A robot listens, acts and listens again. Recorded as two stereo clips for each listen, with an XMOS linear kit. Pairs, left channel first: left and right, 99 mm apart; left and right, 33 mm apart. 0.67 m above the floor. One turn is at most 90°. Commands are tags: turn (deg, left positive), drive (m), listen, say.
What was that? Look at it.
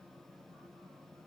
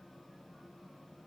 <listen/>
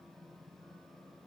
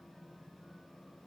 <listen/>
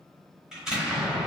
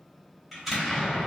<turn deg="-30"/>
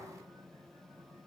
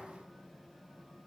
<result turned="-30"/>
<listen/>
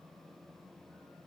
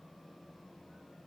<say>I heard an explosion, but can't make it out now. It was about 25° left or 145° right.</say>